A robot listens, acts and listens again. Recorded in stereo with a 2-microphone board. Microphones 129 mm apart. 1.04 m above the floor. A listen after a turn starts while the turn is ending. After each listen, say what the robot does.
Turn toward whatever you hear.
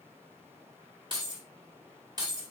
Turn 30° right.
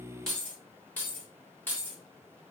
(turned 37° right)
Turn 15° left.
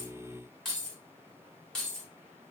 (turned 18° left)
Facing the keys jangling, 2 to 4 m away.